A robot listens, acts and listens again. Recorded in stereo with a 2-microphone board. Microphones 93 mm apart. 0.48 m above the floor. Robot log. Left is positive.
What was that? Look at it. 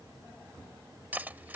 note: The cutlery clinking: about 20° right or 160° right.
cmd yaw -20
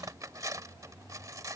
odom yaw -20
note: So it is at 140° right.
cmd yaw -140
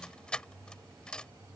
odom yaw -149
note: The cutlery clinking is now 10° left.
cmd yaw +10
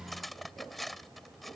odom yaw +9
end: Facing the cutlery clinking.